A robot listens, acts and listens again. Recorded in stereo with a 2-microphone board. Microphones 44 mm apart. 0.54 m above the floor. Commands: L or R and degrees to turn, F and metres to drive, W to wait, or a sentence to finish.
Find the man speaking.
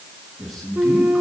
L30
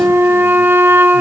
W
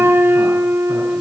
W
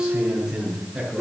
R15
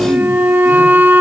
W
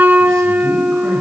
W
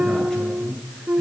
L15
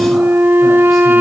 W
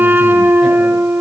W
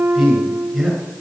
Facing the man speaking.